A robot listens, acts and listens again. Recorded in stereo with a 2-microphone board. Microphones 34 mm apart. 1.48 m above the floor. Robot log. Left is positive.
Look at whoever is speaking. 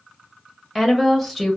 cmd yaw +30
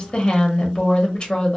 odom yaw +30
note: So it is at 150° left.
cmd yaw +150
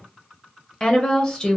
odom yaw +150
note: The woman speaking is now 25° left.
cmd yaw +25
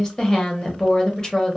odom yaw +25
note: The woman speaking is now 20° left.
cmd yaw +20
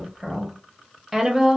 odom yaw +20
end: Facing the woman speaking, under 1 m away.